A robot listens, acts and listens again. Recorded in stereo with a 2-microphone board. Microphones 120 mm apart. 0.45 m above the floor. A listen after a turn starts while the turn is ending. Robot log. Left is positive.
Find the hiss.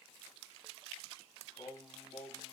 cmd idle
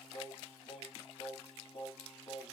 cmd idle
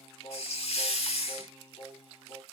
note: The hiss: about 65° left or 115° left.
cmd yaw +65
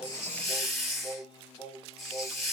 end: Found it: a hiss, straight ahead.